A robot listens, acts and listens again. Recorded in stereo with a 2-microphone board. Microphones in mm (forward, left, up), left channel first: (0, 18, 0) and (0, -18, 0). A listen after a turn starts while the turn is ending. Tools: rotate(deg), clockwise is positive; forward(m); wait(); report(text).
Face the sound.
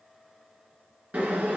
rotate(50)
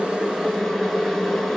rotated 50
report("Facing the boiling, 1 to 2 m away.")